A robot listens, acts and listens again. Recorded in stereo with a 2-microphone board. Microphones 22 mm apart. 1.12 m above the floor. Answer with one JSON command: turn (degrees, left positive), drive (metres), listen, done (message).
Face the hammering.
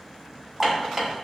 {"turn": -20}
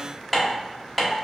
{"done": "Found it: hammering, straight ahead, 1 to 2 m away."}